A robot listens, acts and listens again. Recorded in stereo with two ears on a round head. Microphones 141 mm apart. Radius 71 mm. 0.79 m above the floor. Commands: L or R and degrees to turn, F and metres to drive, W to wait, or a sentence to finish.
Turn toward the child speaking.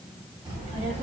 R35
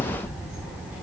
R10
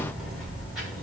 Found it: a child speaking, straight ahead, 2 to 4 m away.